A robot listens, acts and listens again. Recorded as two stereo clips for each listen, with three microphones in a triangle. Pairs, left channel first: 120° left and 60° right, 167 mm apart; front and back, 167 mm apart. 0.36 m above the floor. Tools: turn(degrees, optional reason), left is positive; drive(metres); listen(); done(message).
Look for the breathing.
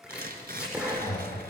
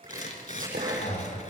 turn(degrees=45, reason="The breathing: 45° left.")
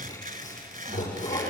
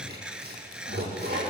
turn(degrees=-10, reason="The breathing is now 10° right.")
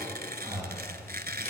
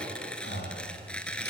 done("Found it: breathing, straight ahead.")